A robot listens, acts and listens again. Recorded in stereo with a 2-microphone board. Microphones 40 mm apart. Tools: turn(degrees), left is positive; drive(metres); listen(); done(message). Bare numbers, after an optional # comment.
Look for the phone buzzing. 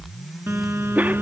turn(-90)
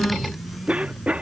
listen()
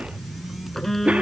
done("Facing the phone buzzing.")